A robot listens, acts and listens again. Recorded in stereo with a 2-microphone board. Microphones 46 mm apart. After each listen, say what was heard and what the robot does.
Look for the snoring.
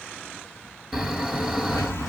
Turn 30° right.
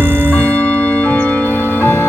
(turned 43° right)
So it is at 135° right. Turn 135° right.
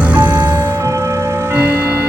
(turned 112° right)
The snoring is now 20° right. Turn 20° right.
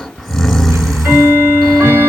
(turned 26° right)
Facing the snoring, 1 to 2 m away.